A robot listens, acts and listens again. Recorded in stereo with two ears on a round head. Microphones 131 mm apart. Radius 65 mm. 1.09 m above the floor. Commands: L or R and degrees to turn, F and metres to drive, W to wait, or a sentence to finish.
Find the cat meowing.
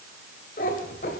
L60
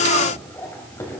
L20
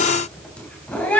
L10
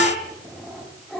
Facing the cat meowing, 2 to 4 m away.